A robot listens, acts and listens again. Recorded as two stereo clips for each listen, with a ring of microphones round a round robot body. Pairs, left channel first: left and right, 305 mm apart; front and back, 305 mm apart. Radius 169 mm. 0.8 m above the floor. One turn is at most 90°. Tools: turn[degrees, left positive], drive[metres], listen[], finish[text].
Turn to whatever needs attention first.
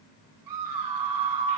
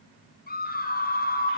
Thought: The scream: 60° right.
Action: turn[-60]
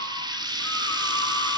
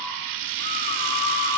Thought: The scream is now 10° left.
Action: turn[10]
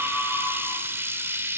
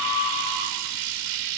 Action: finish[Found it: a scream, straight ahead, over 4 m away.]